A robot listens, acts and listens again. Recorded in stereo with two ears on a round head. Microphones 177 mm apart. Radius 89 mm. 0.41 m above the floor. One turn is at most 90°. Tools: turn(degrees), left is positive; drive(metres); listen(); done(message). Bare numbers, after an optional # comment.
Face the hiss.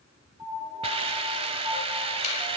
# The hiss: about 30° right or 150° right.
turn(-30)
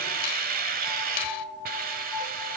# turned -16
# So it is at 135° right.
turn(-90)
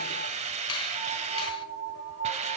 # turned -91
# The hiss is now 40° right.
turn(-40)
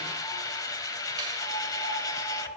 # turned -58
# The hiss is now 20° left.
turn(20)
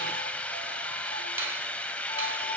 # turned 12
done("Facing the hiss, 1 to 2 m away.")